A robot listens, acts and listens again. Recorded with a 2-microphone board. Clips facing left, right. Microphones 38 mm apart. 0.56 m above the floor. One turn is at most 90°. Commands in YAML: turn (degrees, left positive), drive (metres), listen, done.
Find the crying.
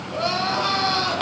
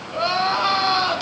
turn: -30
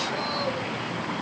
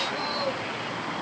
listen: true
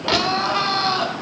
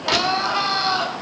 turn: 15
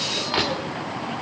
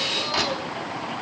listen: true
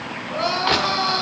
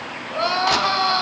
done: "Facing the crying."